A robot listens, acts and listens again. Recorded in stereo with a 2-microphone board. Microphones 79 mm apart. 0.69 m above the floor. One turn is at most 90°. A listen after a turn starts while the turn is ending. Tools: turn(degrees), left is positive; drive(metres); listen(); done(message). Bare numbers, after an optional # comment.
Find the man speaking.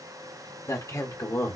# The man speaking: about 40° left or 140° left.
turn(40)
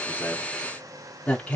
# So it is at 20° left.
turn(20)
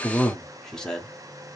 # The man speaking is now 10° left.
turn(10)
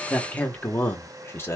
# The man speaking is now 35° left.
turn(35)
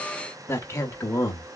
# The man speaking is now 35° left.
turn(35)
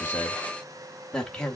# The man speaking is now 10° left.
turn(10)
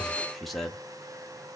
done("Found it: a man speaking, straight ahead, 1 to 2 m away.")